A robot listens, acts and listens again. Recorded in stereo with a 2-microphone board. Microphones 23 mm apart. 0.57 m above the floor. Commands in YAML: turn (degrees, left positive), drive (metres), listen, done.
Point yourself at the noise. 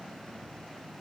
listen: true
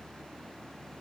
listen: true
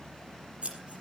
turn: -60
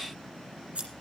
turn: -60
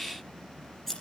turn: 15
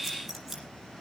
listen: true
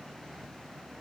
listen: true
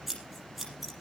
done: "Found it: scissors, straight ahead."